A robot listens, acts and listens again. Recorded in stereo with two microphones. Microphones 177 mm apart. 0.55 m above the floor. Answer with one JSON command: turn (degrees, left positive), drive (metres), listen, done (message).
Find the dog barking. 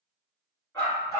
{"turn": 15}
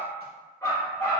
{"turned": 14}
{"turn": 30}
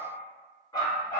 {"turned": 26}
{"turn": 20}
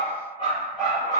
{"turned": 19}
{"turn": 20}
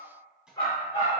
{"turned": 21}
{"turn": 25}
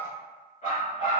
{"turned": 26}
{"turn": 130}
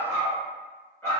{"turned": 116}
{"turn": 10}
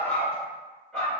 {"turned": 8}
{"done": "Facing the dog barking, 1 to 2 m away."}